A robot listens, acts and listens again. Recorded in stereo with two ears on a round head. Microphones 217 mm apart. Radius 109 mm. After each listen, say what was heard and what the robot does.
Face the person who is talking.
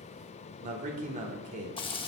The man speaking: about 35° right or 145° right. Turn 35° right.
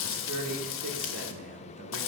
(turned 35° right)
So it is at 110° right. Turn 110° right.
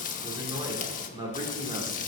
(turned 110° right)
The man speaking is now 20° right. Turn 20° right.
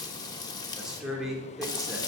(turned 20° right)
Found it: a man speaking, straight ahead.